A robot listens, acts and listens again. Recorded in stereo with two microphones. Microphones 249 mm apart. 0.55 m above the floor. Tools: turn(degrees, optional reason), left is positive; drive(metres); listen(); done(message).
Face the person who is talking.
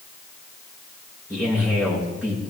turn(degrees=-30)
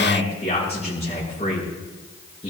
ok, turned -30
turn(degrees=25, reason="So it is at 25° left.")
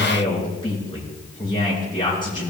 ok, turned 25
turn(degrees=20, reason="The man speaking is now 20° left.")
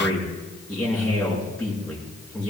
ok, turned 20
done("Facing the man speaking, over 4 m away.")